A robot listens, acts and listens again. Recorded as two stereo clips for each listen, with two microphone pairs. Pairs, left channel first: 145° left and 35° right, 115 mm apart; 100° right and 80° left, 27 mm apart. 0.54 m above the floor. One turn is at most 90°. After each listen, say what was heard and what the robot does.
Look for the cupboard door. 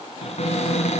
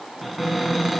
The cupboard door: 165° left. Turn 90° left.
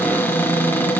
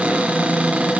The cupboard door is now 75° left. Turn 75° left.
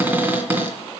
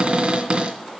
The cupboard door is now 40° left. Turn 40° left.
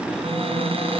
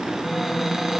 Facing the cupboard door, 2 to 4 m away.